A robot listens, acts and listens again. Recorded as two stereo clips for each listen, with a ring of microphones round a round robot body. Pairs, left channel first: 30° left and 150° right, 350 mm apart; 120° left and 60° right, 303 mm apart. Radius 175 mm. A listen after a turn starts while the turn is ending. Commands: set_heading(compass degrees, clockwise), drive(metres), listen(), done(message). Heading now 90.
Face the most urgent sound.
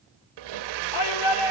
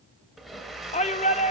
set_heading(35)
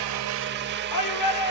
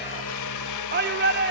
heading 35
done("Found it: a shout, straight ahead, 1 to 2 m away.")